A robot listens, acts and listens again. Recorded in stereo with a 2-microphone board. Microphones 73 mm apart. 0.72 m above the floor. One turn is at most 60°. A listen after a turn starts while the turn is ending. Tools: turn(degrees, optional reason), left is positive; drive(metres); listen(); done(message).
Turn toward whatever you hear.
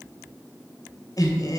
turn(degrees=60, reason="The laughter: about 65° left or 115° left.")
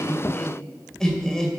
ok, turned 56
turn(degrees=10, reason="So it is at 10° left.")
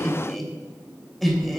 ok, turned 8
done("Found it: laughter, straight ahead.")